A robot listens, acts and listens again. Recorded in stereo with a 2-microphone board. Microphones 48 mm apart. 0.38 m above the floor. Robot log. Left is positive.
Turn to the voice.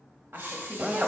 note: The woman speaking: about 60° right or 120° right.
cmd yaw -60
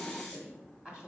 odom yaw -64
note: So it is at 15° right.
cmd yaw -15
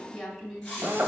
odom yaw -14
end: Facing the woman speaking, 2 to 4 m away.